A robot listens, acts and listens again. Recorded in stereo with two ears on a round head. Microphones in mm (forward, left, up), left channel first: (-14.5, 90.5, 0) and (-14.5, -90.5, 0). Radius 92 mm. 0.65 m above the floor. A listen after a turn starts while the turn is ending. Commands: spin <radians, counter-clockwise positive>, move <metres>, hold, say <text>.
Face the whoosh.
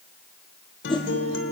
spin 0.44
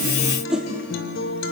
say Facing the whoosh.